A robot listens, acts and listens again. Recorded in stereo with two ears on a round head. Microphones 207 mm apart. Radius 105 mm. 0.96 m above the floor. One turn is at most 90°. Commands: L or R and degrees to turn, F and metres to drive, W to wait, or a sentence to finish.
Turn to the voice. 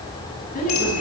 L35
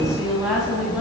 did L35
Found it: a woman speaking, straight ahead.